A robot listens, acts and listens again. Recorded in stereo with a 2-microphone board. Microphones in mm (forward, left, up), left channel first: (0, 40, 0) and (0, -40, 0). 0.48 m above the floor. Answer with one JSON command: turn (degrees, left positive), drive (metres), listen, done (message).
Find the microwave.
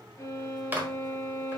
{"turn": -25}
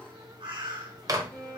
{"turn": -130}
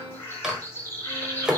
{"done": "Found it: a microwave, straight ahead, 1 to 2 m away."}